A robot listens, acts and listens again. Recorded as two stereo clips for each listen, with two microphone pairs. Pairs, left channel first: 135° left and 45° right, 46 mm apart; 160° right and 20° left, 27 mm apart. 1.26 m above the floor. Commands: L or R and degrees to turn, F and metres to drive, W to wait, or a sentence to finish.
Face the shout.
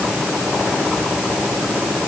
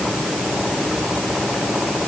W
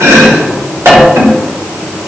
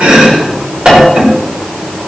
W
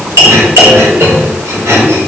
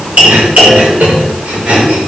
I can't make out a shout, only chopping.